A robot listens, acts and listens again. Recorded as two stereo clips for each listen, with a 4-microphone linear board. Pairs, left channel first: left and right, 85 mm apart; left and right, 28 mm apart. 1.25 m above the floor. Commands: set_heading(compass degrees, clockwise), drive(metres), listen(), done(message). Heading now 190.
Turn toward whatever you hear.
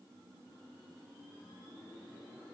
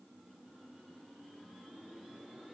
listen()
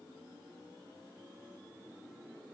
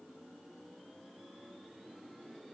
listen()
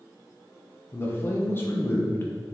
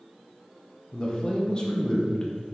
set_heading(165)
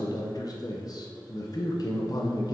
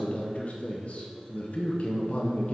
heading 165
set_heading(35)
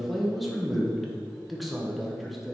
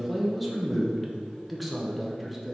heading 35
done("Found it: a man speaking, straight ahead.")